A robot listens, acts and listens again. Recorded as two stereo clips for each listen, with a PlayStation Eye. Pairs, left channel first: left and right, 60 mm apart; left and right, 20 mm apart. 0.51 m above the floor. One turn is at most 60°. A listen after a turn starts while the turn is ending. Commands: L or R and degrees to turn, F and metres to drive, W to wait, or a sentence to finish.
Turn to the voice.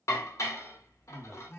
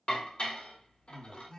R30
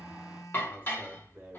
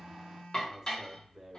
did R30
R60
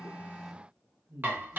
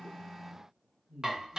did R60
R55
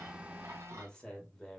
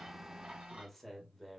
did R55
L15
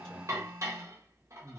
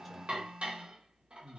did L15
Facing the man speaking, 1 to 2 m away.